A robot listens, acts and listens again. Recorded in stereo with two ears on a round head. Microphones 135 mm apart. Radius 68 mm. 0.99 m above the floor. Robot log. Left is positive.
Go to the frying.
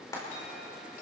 note: The frying: about 25° left or 155° left.
cmd yaw +25
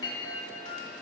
cmd idle
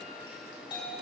cmd idle
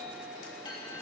end: I heard frying, but can't make it out now. It was about straight ahead or 130° left. I did not reach it.